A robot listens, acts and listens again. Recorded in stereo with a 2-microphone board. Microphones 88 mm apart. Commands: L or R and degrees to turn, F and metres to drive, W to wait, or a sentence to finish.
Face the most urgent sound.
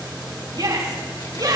R55
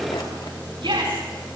R70
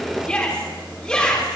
L10
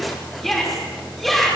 Found it: a shout, straight ahead.